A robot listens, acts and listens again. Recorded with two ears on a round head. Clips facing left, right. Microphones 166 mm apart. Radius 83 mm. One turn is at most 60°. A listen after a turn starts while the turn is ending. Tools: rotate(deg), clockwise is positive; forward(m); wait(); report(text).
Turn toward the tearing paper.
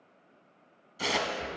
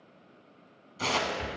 rotate(-30)
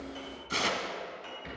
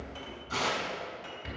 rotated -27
rotate(-60)
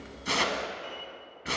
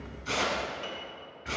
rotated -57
rotate(-60)
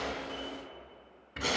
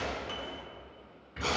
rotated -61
rotate(-20)
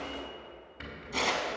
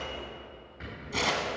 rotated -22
report("Found it: tearing paper, straight ahead, 1 to 2 m away.")